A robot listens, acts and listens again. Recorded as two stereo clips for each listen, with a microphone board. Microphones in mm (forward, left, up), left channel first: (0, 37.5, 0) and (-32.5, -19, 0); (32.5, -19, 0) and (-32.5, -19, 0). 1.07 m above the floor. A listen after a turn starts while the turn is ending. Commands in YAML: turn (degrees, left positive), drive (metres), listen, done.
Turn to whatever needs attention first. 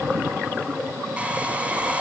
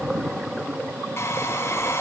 listen: true
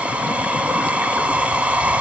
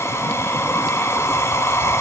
listen: true
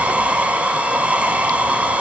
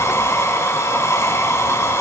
done: "I can't make out anything urgent to turn to."